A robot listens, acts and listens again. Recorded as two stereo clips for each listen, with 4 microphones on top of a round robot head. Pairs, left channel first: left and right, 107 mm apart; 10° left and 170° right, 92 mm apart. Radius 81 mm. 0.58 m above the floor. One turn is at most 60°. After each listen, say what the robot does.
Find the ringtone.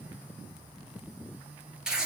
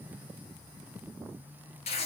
Keep listening.
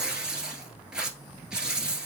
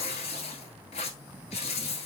Keep listening.
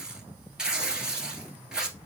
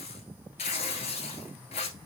I can't make out a ringtone, only tearing paper.